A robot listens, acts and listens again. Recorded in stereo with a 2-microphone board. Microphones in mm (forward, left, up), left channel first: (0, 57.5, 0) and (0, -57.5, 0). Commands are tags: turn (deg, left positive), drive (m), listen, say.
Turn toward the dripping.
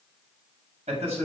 <listen/>
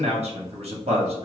<listen/>
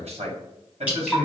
<turn deg="-30"/>
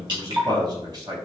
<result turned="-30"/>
<turn deg="-140"/>
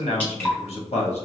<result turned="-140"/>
<turn deg="15"/>
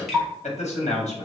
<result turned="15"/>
<say>Facing the dripping.</say>